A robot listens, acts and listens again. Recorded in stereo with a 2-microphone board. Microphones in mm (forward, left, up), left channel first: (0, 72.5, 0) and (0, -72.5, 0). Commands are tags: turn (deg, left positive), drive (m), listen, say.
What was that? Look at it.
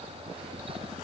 <listen/>
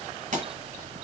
<turn deg="-60"/>
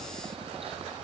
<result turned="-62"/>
<listen/>
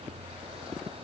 <say>I heard a pop, but can't make it out now. It was about 5° left or 60° right.</say>